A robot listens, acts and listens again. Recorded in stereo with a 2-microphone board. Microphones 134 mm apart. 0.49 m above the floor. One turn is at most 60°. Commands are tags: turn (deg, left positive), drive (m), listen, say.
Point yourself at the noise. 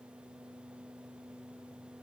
<listen/>
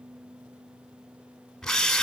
<turn deg="30"/>
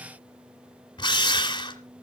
<turn deg="60"/>
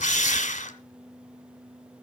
<turn deg="60"/>
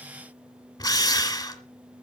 <turn deg="30"/>
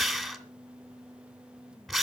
<say>Found it: a drill, straight ahead.</say>